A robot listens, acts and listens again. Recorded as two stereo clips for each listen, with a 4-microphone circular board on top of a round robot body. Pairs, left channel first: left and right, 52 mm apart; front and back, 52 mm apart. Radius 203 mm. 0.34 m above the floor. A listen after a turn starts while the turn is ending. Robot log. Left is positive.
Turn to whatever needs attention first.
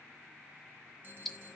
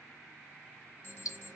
note: The alarm: 45° right.
cmd yaw -45
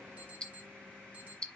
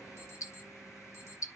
note: The alarm is now 30° right.
cmd yaw -30
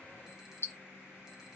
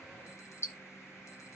cmd idle
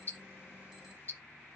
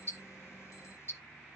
cmd idle
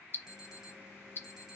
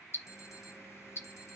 note: The alarm is now 10° right.
cmd yaw -10
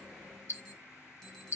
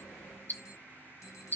end: Facing the alarm.